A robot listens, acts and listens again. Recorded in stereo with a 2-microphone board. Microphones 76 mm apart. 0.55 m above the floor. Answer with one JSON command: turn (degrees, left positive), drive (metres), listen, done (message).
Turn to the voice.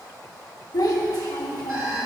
{"turn": 75}
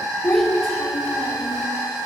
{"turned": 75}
{"done": "Facing the child speaking."}